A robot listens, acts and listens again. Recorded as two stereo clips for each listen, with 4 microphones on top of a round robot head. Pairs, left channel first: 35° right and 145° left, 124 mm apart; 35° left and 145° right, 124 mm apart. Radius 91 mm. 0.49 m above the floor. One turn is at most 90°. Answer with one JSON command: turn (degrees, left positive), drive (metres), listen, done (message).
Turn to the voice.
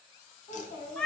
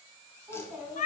{"turn": -70}
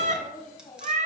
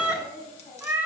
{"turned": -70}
{"turn": 25}
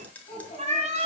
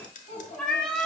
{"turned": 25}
{"done": "Found it: a child speaking, straight ahead."}